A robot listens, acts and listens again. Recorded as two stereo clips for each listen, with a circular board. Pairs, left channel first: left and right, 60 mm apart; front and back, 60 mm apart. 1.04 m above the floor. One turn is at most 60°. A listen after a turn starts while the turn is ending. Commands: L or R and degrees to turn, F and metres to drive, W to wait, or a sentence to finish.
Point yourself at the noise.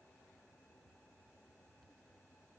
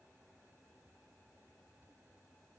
W
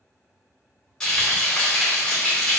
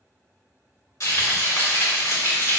Facing the frying, 1 to 2 m away.